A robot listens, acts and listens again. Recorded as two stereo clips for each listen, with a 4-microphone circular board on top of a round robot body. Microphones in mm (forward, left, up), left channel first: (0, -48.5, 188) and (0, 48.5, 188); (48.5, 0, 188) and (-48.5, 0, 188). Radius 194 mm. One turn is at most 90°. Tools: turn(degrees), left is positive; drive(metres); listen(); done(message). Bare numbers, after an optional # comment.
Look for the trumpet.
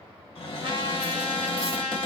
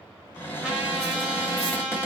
# The trumpet: 100° left.
turn(90)
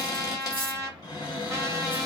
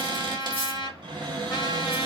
# The trumpet is now 35° left.
turn(35)
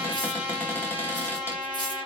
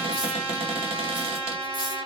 # The trumpet is now 10° left.
turn(10)
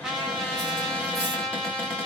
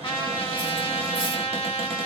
done("Found it: a trumpet, straight ahead, 1 to 2 m away.")